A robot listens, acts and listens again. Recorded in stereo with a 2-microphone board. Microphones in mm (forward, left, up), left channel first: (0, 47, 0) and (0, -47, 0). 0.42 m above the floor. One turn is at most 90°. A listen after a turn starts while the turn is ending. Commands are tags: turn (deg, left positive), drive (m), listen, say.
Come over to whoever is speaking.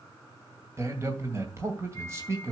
<turn deg="-30"/>
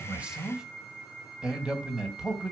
<turn deg="-10"/>
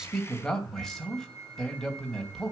<drive m="1.0"/>
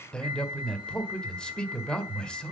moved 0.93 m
<turn deg="10"/>
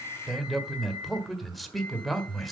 <drive m="1.0"/>
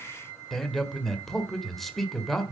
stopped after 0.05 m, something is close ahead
<say>I am next to the man speaking.</say>